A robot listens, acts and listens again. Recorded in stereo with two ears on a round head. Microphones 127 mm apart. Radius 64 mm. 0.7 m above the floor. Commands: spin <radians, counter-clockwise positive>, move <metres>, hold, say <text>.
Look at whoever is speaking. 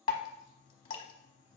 hold
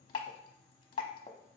hold
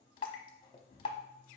say I can't make out anyone speaking, only dripping.